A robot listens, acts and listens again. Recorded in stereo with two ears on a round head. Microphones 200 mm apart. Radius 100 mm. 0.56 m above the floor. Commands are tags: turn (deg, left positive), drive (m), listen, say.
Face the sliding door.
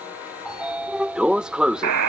<turn deg="-30"/>
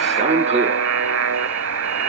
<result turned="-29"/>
<turn deg="-150"/>
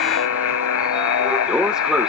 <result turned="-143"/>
<say>Found it: a sliding door, straight ahead.</say>